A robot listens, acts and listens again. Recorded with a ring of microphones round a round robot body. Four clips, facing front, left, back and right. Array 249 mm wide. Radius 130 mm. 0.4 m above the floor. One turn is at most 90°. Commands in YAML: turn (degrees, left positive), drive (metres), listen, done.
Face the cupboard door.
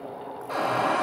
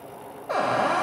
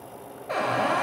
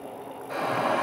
turn: 90
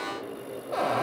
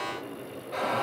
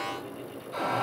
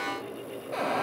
turn: -25
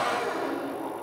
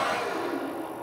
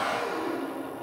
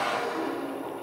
turn: 10
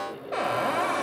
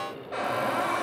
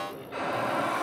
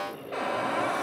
done: "Facing the cupboard door."